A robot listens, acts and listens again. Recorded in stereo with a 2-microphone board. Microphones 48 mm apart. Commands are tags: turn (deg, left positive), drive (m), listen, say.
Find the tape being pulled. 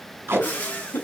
<turn deg="-50"/>
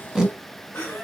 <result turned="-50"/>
<say>Found it: tape being pulled, straight ahead.</say>